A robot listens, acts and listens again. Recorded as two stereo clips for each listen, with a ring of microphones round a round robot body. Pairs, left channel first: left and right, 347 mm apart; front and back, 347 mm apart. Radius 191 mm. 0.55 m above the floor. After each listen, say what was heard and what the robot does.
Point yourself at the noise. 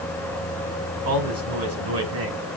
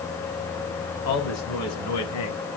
The man speaking: 40° right. Turn 40° right.
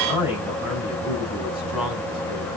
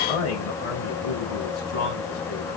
Found it: a man speaking, straight ahead.